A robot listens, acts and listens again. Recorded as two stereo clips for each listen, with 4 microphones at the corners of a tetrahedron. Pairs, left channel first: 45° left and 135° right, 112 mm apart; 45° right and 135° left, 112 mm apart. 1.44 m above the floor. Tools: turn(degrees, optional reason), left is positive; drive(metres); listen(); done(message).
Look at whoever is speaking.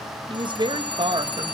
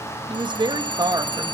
turn(degrees=-175, reason="The woman speaking: 175° right.")
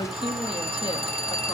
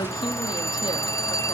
listen()
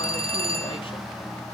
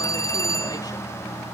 listen()
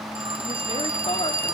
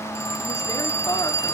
done("Facing where the woman speaking came from. I can't hear it now.")